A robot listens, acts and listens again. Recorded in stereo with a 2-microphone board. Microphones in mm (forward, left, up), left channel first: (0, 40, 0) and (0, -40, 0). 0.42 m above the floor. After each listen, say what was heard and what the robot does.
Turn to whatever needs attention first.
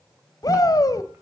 The shout: about 50° left or 130° left. Turn 50° left.
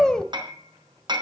So it is at 10° left. Turn 10° left.
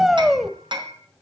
Facing the shout.